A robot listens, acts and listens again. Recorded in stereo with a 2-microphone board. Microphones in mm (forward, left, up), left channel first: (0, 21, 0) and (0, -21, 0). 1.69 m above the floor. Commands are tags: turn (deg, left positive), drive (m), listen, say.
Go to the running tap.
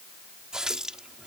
<turn deg="-20"/>
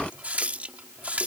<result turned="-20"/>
<turn deg="-140"/>
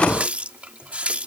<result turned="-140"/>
<turn deg="-35"/>
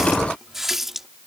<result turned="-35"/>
<turn deg="-10"/>
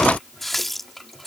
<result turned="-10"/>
<drive m="1.0"/>
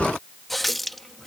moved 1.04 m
<drive m="1.0"/>
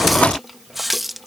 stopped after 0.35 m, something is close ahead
<say>Arrived at the running tap, straight ahead.</say>